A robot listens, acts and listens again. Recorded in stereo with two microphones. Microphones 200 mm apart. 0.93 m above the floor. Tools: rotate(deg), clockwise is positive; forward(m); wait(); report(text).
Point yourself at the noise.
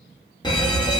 rotate(-20)
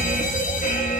rotate(-140)
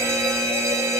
rotate(15)
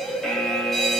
report("Found it: an alarm, straight ahead.")